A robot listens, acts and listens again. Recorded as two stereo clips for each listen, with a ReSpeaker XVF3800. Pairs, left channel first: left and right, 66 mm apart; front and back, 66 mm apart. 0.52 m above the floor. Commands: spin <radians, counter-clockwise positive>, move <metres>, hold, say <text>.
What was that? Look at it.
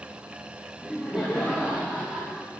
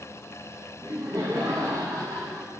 spin -2.97
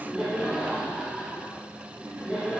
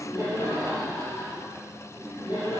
say Facing the laughter.